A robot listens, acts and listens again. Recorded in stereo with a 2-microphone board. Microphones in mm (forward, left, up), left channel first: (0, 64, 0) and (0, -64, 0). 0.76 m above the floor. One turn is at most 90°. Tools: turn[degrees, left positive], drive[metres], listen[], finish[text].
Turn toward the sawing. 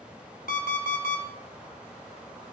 Action: listen[]
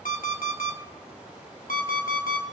Action: listen[]
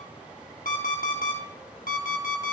Action: finish[I can't make out sawing to turn to.]